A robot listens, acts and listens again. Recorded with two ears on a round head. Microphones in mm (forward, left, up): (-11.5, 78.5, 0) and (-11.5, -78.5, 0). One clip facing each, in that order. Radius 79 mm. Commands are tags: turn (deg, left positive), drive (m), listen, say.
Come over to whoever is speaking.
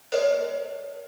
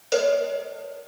<listen/>
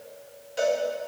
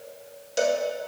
<listen/>
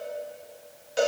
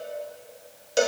<say>I can't make out anyone speaking to turn to.</say>